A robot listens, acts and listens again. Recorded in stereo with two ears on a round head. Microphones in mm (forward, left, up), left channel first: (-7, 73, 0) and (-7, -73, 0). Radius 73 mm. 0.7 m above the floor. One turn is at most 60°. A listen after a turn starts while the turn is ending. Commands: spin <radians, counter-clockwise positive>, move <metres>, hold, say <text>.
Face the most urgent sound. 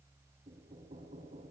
hold
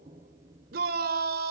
spin -1.05
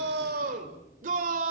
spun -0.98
spin -0.96
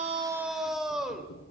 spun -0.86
say Facing the shout, 2 to 4 m away.